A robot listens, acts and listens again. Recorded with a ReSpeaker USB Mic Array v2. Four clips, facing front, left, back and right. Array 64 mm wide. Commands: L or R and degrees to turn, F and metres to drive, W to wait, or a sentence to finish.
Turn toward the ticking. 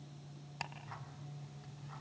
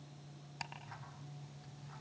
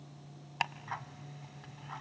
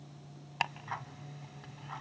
R125
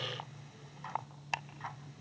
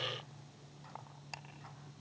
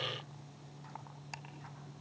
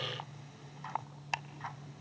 R35
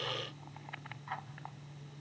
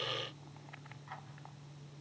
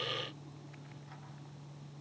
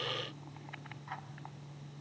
R10
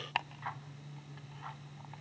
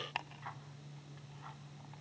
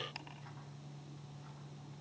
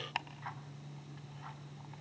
Found it: ticking, straight ahead.